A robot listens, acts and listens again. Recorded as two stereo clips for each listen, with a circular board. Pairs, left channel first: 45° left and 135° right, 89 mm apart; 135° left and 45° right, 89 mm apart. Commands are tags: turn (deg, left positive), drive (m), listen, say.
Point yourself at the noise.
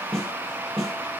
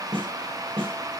<turn deg="-40"/>
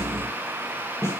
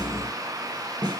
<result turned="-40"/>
<turn deg="-10"/>
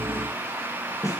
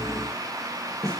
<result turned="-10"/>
<say>Facing the snare drum, over 4 m away.</say>